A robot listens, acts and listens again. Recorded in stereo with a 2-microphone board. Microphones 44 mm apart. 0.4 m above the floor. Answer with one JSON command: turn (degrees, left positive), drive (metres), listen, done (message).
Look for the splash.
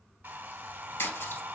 {"turn": 90}
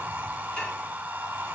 {"done": "I heard a splash from this way, but can't make it out now."}